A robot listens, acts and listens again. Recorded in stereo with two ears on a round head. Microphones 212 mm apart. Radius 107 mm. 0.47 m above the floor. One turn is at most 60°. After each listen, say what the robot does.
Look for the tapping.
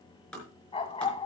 Turn 30° left.
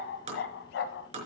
Turn 30° right.
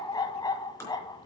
Turn 10° left.
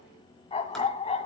Keep listening.
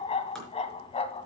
Keep listening.
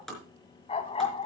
Found it: tapping, straight ahead, over 4 m away.